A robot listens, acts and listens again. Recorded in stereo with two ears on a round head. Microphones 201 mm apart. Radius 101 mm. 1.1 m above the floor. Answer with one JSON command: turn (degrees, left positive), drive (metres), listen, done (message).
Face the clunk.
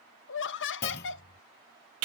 {"turn": 45}
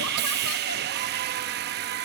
{"listen": true}
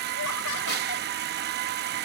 {"done": "I heard a clunk, but can't make it out now. It was about straight ahead or 90° left."}